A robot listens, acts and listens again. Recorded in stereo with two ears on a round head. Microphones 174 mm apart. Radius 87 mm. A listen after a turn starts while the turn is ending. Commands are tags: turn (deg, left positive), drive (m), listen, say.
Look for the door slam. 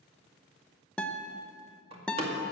<turn deg="-30"/>
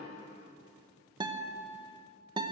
<listen/>
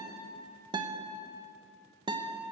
<say>I heard a door slam, but can't make it out now. It was about straight ahead or 120° right.</say>